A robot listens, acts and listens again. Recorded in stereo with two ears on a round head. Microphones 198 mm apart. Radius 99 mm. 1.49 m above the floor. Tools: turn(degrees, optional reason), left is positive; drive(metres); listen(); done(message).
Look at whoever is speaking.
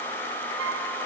listen()
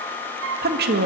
turn(degrees=-45, reason="The woman speaking: about 45° right or 135° right.")
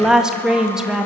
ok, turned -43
done("Found it: a woman speaking, straight ahead.")